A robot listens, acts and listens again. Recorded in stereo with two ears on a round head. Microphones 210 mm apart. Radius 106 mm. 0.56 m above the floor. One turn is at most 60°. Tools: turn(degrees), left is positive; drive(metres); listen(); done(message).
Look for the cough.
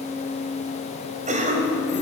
turn(degrees=-35)
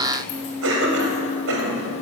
turn(degrees=-60)
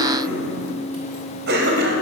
turn(degrees=-50)
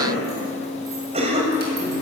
turn(degrees=-30)
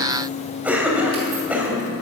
done("Facing the cough.")